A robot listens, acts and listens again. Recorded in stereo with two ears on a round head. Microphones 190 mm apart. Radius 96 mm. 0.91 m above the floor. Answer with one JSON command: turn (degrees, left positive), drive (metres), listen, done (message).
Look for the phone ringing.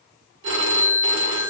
{"turn": -65}
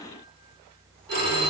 {"turn": -50}
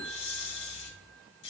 {"done": "Facing the phone ringing, 1 to 2 m away."}